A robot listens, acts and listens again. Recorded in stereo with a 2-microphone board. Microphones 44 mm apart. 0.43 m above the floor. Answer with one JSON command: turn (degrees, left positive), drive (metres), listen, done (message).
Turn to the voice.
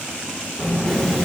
{"turn": 45}
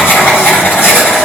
{"listen": true}
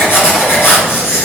{"listen": true}
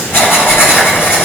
{"turn": 80}
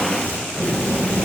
{"done": "Facing the child speaking."}